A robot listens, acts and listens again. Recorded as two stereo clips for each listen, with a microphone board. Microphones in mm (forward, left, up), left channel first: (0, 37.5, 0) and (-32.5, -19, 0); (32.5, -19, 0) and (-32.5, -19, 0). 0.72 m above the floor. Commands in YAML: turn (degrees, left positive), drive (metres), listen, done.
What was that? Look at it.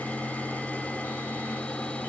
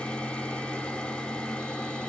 listen: true
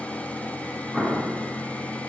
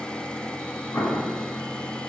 turn: -35
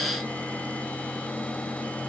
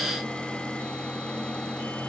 done: "Facing where the explosion came from. I can't hear it now."